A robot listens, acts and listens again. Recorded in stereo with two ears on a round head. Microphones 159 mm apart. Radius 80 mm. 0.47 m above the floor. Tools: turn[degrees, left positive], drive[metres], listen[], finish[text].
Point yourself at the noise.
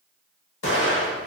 Thought: The explosion: about 75° left or 105° left.
Action: turn[75]
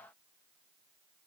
Action: listen[]
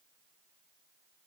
Action: finish[I heard an explosion, but can't make it out now. It was about straight ahead or 30° left.]